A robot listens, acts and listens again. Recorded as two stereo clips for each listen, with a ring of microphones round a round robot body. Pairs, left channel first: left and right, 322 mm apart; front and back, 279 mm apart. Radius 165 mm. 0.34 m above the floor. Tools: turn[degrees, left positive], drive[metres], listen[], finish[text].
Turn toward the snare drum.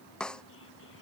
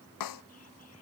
Action: finish[Facing the snare drum.]